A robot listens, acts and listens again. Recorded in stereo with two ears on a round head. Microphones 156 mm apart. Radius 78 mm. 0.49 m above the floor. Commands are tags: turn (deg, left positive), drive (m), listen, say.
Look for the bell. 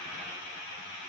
<listen/>
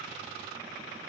<listen/>
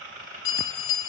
<turn deg="45"/>
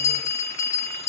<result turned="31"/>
<turn deg="20"/>
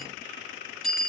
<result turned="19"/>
<say>Facing the bell, under 1 m away.</say>